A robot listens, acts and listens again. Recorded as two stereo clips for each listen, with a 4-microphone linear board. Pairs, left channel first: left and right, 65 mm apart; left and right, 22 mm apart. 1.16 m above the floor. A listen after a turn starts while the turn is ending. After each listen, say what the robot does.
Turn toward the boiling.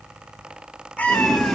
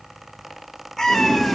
Turn 30° left.
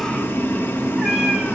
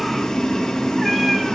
Turn 145° left.
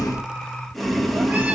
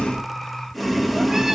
Facing the boiling, under 1 m away.